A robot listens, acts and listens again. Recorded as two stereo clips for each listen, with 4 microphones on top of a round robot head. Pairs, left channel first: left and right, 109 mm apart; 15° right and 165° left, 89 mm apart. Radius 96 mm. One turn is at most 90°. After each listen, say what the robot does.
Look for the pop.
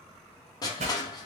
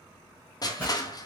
Turn 90° right.
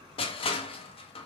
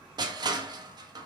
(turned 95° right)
I heard a pop from this way, but can't make it out now.